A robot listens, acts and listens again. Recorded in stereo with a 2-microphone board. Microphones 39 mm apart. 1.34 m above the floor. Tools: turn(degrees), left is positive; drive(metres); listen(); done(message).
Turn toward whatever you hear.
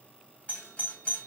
turn(degrees=30)
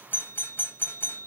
turn(degrees=115)
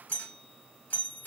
turn(degrees=50)
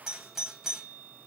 turn(degrees=-10)
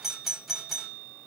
done("Facing the doorbell, 1 to 2 m away.")